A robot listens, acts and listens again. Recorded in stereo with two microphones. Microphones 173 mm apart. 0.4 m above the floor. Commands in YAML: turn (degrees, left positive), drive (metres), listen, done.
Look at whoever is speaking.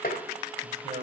turn: -35
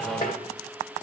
listen: true
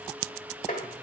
listen: true
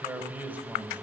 turn: -10
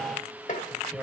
done: "Found it: a man speaking, straight ahead."